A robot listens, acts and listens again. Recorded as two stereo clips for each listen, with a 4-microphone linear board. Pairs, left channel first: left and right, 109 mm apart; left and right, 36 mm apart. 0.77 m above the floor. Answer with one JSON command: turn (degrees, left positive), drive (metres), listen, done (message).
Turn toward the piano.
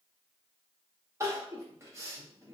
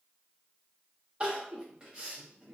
{"listen": true}
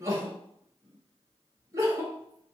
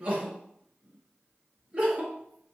{"listen": true}
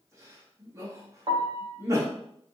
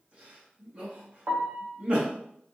{"turn": -40}
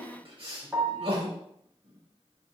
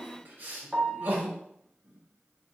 {"turn": -10}
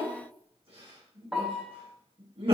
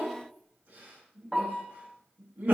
{"done": "Found it: a piano, straight ahead."}